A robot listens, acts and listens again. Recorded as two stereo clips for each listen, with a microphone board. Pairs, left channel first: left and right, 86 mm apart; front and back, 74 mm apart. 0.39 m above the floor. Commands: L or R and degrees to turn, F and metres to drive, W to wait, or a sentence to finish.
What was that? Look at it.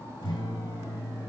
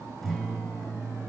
L90
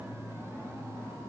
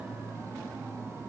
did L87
W
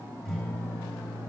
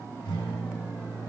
Facing the guitar, over 4 m away.